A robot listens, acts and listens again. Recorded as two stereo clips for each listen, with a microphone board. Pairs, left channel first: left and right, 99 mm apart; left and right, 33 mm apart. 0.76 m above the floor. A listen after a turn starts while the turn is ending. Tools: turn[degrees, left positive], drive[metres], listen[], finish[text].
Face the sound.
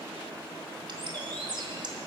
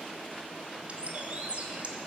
Thought: The bird: about 50° right or 130° right.
Action: turn[-50]
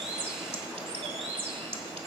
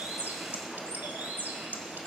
Thought: So it is at 80° right.
Action: turn[-80]
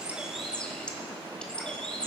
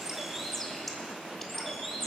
Thought: The bird is now 10° left.
Action: turn[10]
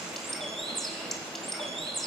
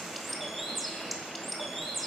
Action: finish[Facing the bird, 1 to 2 m away.]